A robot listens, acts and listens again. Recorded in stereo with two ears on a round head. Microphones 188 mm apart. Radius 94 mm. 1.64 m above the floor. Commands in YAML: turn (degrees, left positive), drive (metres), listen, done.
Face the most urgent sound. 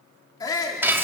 turn: 20
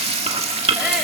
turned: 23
listen: true
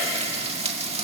listen: true
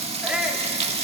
done: "Facing the shout."